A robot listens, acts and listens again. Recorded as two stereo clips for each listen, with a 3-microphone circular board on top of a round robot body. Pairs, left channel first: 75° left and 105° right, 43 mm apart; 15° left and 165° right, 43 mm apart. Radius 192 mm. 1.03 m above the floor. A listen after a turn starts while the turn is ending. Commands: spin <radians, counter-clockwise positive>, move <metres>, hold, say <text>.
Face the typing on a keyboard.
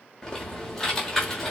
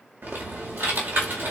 spin 2.71
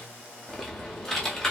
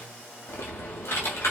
say Facing the typing on a keyboard.